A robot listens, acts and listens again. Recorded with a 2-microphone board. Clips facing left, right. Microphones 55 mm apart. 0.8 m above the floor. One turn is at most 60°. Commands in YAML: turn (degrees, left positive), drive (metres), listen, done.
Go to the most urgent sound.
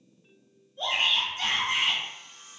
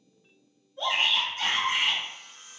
turn: -55
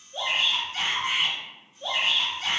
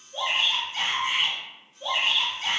turn: -15
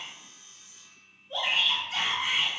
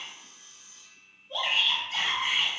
drive: 1.0
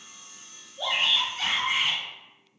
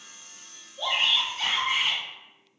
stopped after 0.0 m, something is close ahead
done: "Blocked. The shout is further on, straight ahead."